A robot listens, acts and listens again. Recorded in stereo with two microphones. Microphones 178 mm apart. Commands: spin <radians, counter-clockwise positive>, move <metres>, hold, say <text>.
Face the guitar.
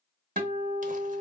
spin -1.05
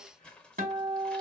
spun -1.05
spin -1.05
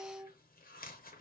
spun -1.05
say Facing the guitar, 1 to 2 m away.